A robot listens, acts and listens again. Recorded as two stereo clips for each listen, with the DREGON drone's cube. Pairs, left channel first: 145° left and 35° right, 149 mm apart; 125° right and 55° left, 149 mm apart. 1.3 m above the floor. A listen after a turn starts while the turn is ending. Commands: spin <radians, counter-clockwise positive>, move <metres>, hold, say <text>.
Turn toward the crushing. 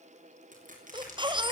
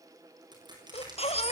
say Facing the crushing.